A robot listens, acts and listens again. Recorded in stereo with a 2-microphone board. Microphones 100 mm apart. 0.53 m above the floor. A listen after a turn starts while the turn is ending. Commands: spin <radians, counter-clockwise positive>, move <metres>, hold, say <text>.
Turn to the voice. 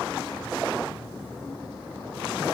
hold
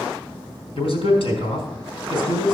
spin 1.22
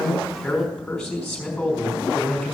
say Facing the man speaking, over 4 m away.